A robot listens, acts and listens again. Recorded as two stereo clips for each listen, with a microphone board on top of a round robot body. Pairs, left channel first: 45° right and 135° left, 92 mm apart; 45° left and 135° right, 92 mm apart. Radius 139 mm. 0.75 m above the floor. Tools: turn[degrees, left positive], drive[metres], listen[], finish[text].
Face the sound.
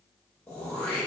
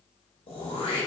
Thought: The throat clearing: 30° left.
Action: turn[30]
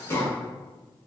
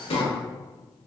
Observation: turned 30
Thought: The throat clearing is now 15° left.
Action: turn[15]
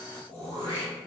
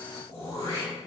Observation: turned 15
Thought: The throat clearing is now 10° right.
Action: turn[-10]
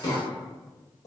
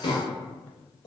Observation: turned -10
Action: finish[Facing the throat clearing.]